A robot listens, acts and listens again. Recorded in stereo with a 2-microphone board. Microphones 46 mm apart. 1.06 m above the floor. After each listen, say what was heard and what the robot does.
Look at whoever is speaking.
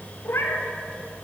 Keep listening.
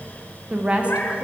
The woman speaking: about 25° right or 155° right. Turn 25° right.
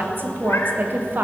So it is at 130° right. Turn 130° right.
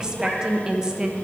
The woman speaking is now 20° right. Turn 20° right.
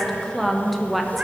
Facing the woman speaking, under 1 m away.